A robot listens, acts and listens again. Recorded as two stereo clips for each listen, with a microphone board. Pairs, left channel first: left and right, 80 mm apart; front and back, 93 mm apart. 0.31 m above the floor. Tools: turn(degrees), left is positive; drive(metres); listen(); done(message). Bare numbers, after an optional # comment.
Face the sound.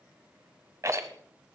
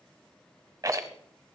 # The rattle: 135° right.
turn(-135)
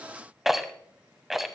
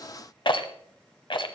done("Facing the rattle.")